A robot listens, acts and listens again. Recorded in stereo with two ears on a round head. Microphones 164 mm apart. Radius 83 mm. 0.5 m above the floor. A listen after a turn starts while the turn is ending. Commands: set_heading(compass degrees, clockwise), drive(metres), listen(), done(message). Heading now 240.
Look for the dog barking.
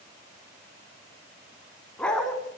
set_heading(210)
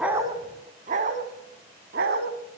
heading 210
set_heading(270)
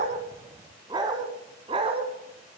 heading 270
set_heading(300)
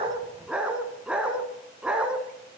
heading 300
done("Facing the dog barking.")